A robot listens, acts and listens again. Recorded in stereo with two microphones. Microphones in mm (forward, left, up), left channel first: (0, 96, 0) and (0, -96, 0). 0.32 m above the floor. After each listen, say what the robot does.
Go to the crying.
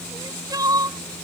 Turn 20° right.
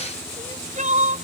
Turn 135° right.
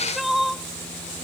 Drive 1.0 m forward.
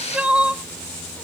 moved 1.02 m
Drive 1.0 m forward.
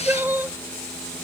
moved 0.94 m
Turn 15° right.
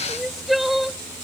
Drive 1.0 m forward.
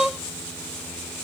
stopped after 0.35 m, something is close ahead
I am next to the crying.